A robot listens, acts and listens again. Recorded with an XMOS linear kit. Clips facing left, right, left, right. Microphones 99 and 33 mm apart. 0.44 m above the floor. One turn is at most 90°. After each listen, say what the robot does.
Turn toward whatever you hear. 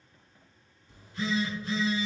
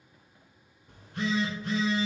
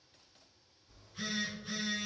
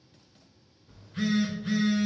Turn 60° right.
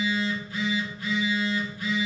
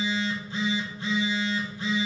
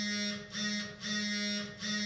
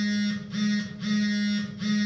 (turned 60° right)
Turn 30° right.
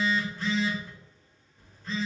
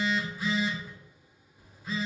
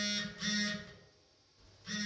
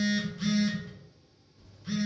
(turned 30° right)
Turn 10° right.
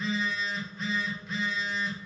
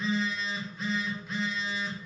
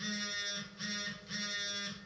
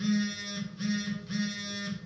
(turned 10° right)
Found it: a phone buzzing, straight ahead, under 1 m away.